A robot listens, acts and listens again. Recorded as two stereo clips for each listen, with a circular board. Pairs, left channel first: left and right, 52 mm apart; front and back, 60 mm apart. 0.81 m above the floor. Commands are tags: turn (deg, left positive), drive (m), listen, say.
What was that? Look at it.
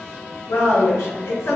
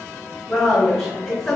<turn deg="80"/>
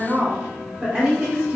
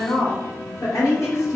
<turn deg="-25"/>
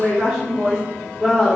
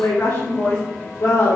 <say>Facing the woman speaking, 2 to 4 m away.</say>